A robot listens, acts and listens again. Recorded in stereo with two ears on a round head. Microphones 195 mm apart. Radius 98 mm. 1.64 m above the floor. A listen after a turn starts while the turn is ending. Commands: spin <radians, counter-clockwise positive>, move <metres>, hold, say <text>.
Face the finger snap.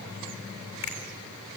spin 1.22
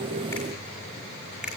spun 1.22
say Found it: a finger snap, straight ahead.